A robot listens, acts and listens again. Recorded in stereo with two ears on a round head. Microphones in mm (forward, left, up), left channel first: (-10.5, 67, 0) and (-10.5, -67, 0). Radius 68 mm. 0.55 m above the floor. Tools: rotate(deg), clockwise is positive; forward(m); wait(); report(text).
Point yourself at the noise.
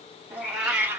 rotate(15)
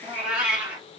rotate(30)
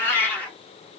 rotate(-10)
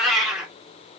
report("Facing the cat meowing.")